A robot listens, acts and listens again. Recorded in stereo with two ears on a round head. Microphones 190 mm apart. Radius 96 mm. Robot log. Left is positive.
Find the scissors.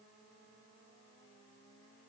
cmd idle
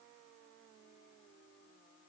cmd idle
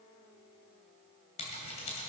note: The scissors: about 30° left or 150° left.
cmd yaw +30
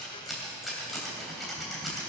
end: Facing the scissors.